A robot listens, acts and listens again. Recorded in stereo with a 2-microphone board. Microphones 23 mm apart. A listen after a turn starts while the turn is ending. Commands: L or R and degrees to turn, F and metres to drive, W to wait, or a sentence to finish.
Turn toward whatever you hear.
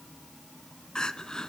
L30
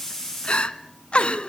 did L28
L120
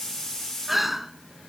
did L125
Facing the crying.